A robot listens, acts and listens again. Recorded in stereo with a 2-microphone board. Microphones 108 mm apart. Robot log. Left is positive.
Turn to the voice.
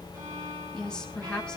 cmd yaw +30
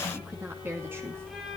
note: So it is at 20° right.
cmd yaw -20
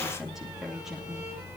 end: Found it: a woman speaking, straight ahead, 2 to 4 m away.